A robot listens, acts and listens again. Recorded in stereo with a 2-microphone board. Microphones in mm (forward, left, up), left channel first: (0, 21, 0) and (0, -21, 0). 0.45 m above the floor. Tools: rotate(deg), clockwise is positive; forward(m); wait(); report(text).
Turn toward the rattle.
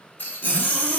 rotate(-55)
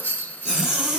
rotate(-60)
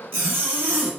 wait()
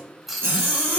report("Facing the rattle.")